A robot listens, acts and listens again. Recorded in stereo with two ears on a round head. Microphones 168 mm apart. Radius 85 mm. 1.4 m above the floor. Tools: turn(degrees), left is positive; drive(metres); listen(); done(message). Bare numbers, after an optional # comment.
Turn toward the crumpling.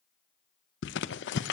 # The crumpling: about 70° left or 110° left.
turn(70)
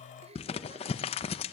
# So it is at 35° left.
turn(35)
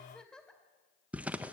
# The crumpling is now 10° right.
turn(-10)
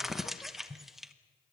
done("Found it: crumpling, straight ahead.")